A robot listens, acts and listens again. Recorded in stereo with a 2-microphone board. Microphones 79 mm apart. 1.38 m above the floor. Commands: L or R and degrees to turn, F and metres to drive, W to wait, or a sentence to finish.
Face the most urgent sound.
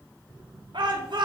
R75
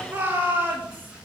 R25
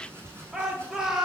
R10
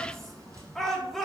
Facing the shout, 2 to 4 m away.